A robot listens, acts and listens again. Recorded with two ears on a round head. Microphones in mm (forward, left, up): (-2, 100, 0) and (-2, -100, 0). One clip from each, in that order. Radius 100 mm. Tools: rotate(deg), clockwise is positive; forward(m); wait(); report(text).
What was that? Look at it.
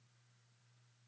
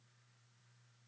wait()
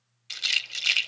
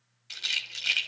rotate(-25)
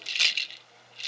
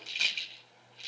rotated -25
rotate(-130)
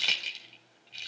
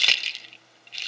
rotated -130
rotate(35)
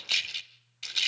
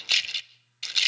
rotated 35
rotate(15)
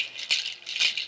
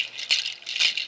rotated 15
report("Facing the rattle.")